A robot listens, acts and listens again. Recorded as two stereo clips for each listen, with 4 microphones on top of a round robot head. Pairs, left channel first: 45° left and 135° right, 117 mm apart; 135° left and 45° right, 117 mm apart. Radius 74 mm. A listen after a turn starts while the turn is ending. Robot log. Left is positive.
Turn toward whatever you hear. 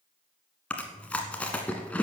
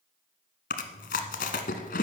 note: The chewing: 125° left.
cmd yaw +125
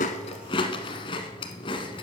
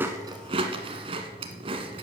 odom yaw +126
end: Found it: chewing, straight ahead.